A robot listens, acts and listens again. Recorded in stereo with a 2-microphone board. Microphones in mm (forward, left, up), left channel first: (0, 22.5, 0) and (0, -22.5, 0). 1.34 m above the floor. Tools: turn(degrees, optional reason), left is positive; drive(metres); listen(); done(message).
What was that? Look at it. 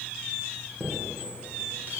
turn(degrees=-45, reason="The chime: about 45° right or 135° right.")
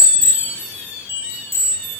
turn(degrees=-90, reason="So it is at 90° right.")
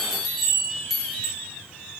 done("Facing the chime, 1 to 2 m away.")